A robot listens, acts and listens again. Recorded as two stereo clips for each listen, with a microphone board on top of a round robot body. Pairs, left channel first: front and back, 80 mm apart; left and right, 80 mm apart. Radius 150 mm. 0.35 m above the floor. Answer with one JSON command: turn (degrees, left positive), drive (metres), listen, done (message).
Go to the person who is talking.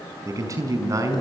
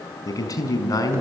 {"turn": 135}
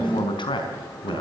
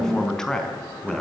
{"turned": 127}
{"drive": 1.0}
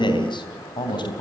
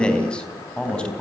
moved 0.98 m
{"turn": 10}
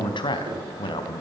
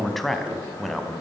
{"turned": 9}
{"drive": 1.0}
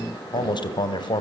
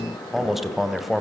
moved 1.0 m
{"drive": 1.0}
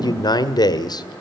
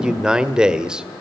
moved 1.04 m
{"turn": -10}
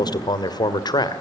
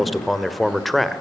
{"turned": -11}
{"drive": 1.0}
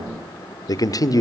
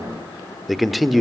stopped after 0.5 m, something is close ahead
{"done": "I am next to the man speaking."}